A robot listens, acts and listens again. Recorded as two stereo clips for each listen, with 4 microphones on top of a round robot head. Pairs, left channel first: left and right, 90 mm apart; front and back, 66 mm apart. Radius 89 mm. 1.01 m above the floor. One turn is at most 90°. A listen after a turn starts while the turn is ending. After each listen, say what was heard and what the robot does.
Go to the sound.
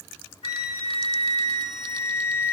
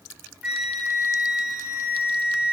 The flute: 105° left. Turn 90° left.
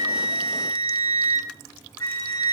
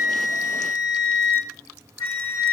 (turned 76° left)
The flute is now 30° left. Turn 30° left.
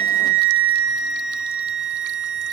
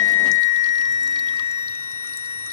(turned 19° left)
The flute is now 10° left. Turn 10° left.
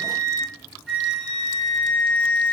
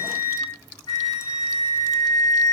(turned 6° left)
Drive 1.0 m forward.
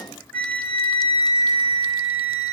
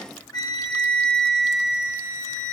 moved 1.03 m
The flute is now 15° left. Turn 15° left.
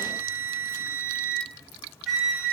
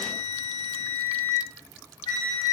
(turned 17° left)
Drive 1.0 m forward.
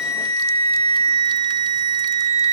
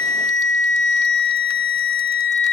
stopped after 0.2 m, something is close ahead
I am next to the flute.